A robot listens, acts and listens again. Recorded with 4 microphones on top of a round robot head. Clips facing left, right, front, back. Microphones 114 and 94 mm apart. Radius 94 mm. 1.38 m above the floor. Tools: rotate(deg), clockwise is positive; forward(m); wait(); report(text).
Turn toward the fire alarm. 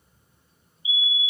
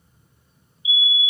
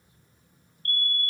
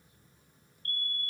rotate(95)
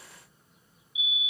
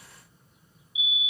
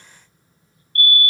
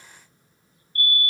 report("Facing the fire alarm.")